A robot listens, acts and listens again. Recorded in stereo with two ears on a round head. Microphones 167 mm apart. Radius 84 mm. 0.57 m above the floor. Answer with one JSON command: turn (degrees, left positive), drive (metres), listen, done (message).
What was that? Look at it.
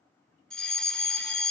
{"turn": 30}
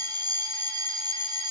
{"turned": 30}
{"turn": -30}
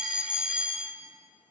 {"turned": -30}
{"turn": -10}
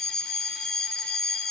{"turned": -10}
{"done": "Found it: a fire alarm, straight ahead, 2 to 4 m away."}